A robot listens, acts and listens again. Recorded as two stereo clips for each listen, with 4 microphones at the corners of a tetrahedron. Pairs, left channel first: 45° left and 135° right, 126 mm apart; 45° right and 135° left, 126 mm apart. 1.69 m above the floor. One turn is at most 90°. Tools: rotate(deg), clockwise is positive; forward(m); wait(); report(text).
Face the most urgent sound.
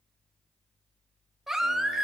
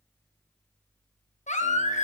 rotate(50)
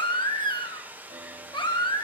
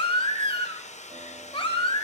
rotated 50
report("Found it: a baby crying, straight ahead.")